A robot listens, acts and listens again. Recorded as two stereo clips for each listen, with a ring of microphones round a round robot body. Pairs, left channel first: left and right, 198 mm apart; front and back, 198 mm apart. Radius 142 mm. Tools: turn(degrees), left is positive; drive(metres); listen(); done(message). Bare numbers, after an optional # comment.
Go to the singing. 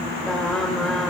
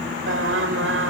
# The singing: 175° left.
turn(175)
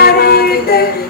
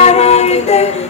# The singing is now 55° left.
turn(55)
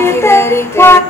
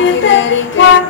# The singing is now 10° left.
turn(10)
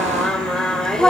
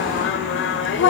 drive(1.0)
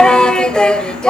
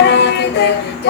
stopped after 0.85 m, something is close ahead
done("Arrived at the singing, straight ahead.")